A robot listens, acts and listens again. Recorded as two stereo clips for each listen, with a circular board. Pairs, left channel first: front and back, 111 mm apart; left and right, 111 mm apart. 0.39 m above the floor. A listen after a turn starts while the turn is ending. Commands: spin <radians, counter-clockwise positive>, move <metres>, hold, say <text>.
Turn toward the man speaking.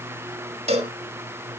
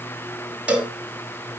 hold
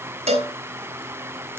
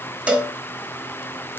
hold
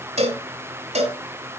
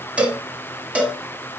say I can't make out a man speaking, only a cowbell.